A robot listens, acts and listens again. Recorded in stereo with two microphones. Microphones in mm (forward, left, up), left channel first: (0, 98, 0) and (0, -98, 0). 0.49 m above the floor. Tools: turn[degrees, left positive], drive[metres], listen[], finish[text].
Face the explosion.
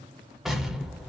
Action: turn[30]
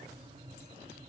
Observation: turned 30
Action: listen[]
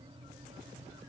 Action: finish[I heard an explosion, but can't make it out now. It was about 30° right or 150° left.]